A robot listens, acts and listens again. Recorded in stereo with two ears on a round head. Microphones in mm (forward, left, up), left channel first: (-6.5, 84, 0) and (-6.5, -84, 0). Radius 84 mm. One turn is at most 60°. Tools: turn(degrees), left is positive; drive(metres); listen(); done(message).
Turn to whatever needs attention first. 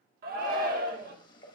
turn(degrees=-50)
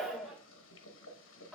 done("Found it: a shout, straight ahead, 1 to 2 m away.")